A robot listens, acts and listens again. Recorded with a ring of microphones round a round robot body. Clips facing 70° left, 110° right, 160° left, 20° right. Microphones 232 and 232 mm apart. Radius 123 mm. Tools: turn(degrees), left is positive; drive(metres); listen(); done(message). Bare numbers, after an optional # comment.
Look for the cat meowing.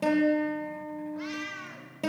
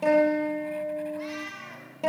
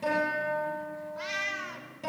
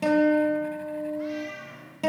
# The cat meowing: 145° left.
turn(145)
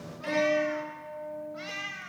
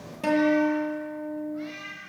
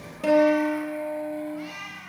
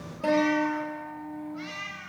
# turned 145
# The cat meowing is now 45° left.
turn(45)
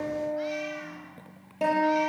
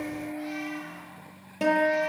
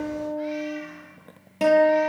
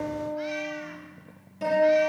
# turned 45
listen()
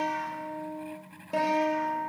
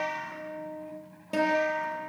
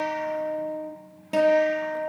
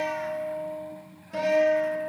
listen()
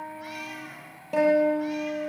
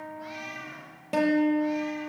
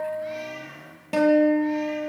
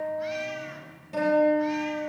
done("I heard a cat meowing from this way, but can't make it out now.")